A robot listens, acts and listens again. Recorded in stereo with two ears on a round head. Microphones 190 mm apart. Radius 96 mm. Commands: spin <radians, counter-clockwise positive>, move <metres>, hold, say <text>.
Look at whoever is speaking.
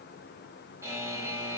hold
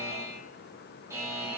hold
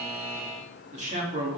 spin -0.61
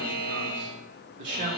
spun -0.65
spin -2.09
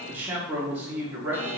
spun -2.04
spin -0.17
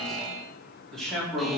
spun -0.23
say Found it: a man speaking, straight ahead, 2 to 4 m away.